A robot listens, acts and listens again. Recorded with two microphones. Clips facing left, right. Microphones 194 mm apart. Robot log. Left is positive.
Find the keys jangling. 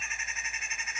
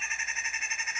cmd idle
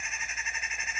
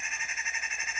cmd idle
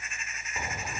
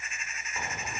cmd yaw +30
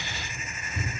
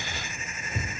note: So it is at 50° right.
cmd yaw -50
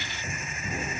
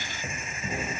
note: The keys jangling is now 35° right.
cmd yaw -35
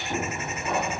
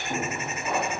end: Facing the keys jangling, 2 to 4 m away.